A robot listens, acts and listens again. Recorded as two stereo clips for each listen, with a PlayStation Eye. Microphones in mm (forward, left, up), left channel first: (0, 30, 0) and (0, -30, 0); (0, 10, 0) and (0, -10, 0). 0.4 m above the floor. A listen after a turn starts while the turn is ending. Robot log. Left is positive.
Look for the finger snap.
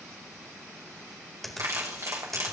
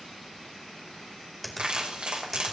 cmd yaw +30
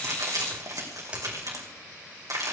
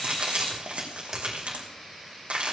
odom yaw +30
note: So it is at 25° right.
cmd yaw -25
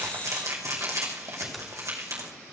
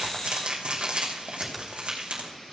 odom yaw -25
cmd idle
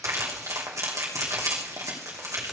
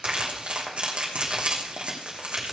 cmd idle
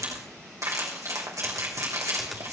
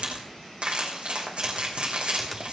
end: I heard a finger snap from this way, but can't make it out now.